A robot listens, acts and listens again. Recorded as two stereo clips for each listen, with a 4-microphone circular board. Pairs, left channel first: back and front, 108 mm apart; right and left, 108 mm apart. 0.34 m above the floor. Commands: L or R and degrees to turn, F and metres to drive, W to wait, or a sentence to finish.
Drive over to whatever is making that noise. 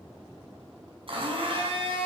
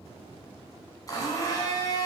R35
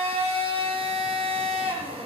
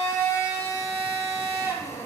R25
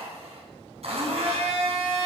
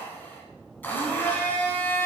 R15
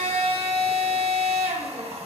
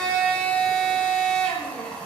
R10
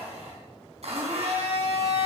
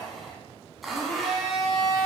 F1.0
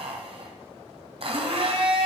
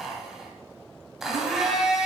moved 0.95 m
F1.0
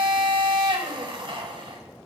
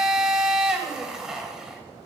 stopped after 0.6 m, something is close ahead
L10
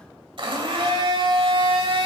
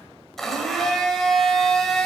I am next to the blender.